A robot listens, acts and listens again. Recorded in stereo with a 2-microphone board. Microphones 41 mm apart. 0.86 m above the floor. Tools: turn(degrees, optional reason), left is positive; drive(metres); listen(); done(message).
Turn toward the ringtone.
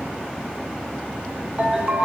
turn(degrees=-25, reason="The ringtone: about 25° right or 155° right.")
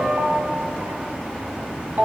turn(degrees=-130, reason="So it is at 130° right.")
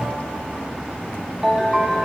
turn(degrees=-20, reason="The ringtone is now 20° right.")
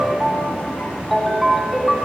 done("Facing the ringtone, 1 to 2 m away.")